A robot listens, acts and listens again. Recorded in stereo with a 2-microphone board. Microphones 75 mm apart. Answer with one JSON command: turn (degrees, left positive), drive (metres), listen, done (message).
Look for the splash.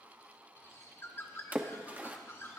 {"turn": -20}
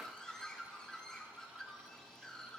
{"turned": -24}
{"listen": true}
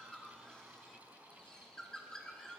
{"done": "I heard a splash, but can't make it out now. It was about 5° left or 135° right."}